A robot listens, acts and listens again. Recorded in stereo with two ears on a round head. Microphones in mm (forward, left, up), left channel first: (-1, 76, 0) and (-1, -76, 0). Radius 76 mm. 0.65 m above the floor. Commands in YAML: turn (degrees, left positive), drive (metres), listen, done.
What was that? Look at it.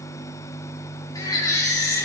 turn: 25
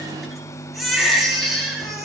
done: "Found it: a baby crying, straight ahead, over 4 m away."